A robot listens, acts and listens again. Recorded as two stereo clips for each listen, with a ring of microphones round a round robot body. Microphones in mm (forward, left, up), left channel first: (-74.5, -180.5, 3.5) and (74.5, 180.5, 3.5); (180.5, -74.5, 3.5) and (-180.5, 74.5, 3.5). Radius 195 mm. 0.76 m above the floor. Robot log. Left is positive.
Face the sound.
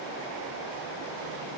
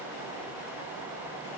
cmd idle
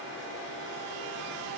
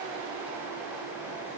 cmd idle
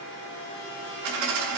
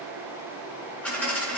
note: The dropped coin: 65° left.
cmd yaw +65
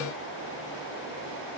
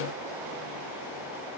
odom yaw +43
note: Nothing new. It was at 20° left.
cmd yaw +20
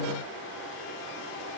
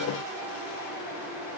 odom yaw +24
end: I heard a dropped coin from this way, but can't make it out now.